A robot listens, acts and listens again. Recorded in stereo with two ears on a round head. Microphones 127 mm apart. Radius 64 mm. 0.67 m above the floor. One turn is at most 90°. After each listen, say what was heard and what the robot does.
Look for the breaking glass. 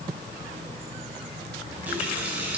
Keep listening.
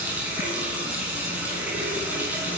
Keep listening.
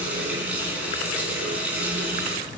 I can't make out breaking glass, only a running tap.